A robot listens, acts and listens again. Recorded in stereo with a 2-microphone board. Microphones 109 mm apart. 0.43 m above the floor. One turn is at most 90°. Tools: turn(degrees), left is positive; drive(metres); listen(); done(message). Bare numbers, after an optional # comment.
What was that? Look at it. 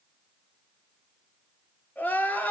turn(30)
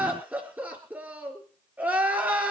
# So it is at 15° right.
turn(-15)
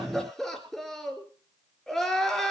done("Facing the crying.")